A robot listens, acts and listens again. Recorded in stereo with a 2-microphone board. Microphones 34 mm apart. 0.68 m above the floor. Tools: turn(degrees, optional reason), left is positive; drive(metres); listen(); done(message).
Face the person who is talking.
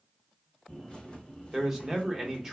turn(degrees=-15, reason="The man speaking: about 15° right or 165° right.")
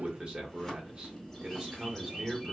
turn(degrees=-155, reason="So it is at 155° right.")
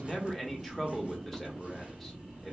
turn(degrees=10, reason="The man speaking is now 10° left.")
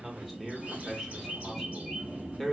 done("Facing the man speaking, under 1 m away.")